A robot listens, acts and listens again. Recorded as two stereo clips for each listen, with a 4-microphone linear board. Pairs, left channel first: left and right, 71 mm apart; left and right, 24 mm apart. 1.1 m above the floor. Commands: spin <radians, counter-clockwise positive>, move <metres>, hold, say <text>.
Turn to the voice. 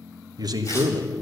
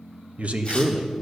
spin -1.22
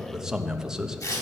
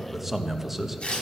spin -0.17
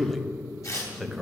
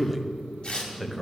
say Facing the man speaking, 1 to 2 m away.